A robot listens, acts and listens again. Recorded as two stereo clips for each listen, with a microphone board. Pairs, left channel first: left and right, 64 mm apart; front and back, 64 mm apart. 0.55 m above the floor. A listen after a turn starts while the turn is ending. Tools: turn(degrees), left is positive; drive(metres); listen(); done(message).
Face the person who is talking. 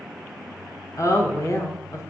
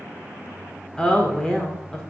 turn(degrees=75)
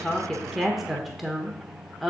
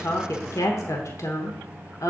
done("Facing the woman speaking.")